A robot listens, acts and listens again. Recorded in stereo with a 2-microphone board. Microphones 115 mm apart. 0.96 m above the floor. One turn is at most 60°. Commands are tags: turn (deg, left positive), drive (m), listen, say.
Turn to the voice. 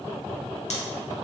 <listen/>
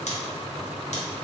<listen/>
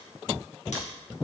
<say>I can't make out anyone speaking to turn to.</say>